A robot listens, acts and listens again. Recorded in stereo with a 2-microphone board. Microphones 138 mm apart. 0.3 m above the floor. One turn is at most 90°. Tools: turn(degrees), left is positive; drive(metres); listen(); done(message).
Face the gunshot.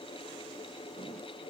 listen()
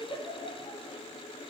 listen()
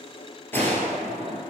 turn(degrees=30)
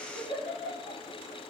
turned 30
listen()
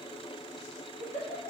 done("I heard a gunshot, but can't make it out now. It was about 15° right or 135° left.")